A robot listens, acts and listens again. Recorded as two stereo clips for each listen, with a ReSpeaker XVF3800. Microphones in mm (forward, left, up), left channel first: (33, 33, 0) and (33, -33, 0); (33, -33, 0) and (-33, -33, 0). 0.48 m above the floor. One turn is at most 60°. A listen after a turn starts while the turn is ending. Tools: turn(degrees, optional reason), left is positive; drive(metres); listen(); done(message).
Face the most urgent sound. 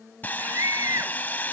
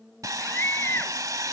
turn(degrees=-55, reason="The scream: 55° right.")
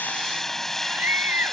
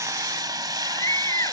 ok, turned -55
turn(degrees=-30, reason="The scream is now 30° right.")
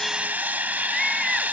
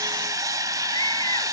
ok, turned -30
listen()
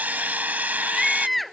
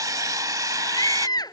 done("Found it: a scream, straight ahead.")